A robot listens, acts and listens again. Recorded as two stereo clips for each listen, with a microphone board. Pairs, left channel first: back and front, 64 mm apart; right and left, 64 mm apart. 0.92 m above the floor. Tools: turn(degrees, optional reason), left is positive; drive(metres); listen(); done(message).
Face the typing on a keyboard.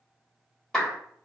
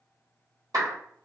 listen()
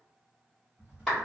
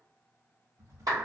turn(degrees=65, reason="The typing on a keyboard: 65° left.")
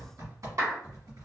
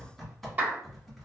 done("Found it: typing on a keyboard, straight ahead.")